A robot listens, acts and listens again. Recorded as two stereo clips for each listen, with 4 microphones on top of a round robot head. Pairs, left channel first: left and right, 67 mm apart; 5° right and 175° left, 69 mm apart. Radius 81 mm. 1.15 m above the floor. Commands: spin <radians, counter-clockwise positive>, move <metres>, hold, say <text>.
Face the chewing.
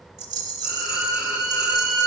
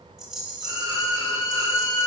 hold
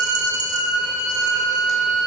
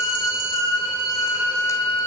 hold
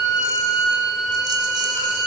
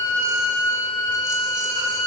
say I can't make out chewing to turn to.